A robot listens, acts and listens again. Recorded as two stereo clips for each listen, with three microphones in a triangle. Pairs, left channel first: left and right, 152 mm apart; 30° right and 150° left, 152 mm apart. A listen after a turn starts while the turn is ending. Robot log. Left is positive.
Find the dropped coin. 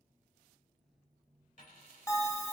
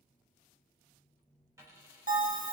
note: The dropped coin: 80° left.
cmd yaw +80
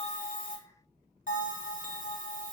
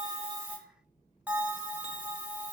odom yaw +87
end: Facing where the dropped coin came from. I can't hear it now.